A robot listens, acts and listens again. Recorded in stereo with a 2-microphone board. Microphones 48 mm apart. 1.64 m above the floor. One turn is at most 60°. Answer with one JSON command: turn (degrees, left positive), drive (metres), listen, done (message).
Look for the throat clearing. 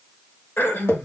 {"turn": 55}
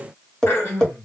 {"turn": 60}
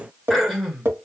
{"done": "Found it: throat clearing, straight ahead, 1 to 2 m away."}